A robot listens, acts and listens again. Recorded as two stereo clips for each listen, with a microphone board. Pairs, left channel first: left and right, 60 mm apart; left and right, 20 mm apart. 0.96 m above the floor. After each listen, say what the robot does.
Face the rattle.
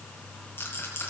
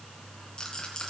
Turn 35° left.
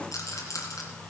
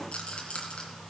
Turn 110° left.
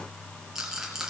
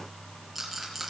Turn 10° right.
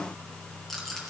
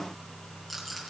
Found it: a rattle, straight ahead.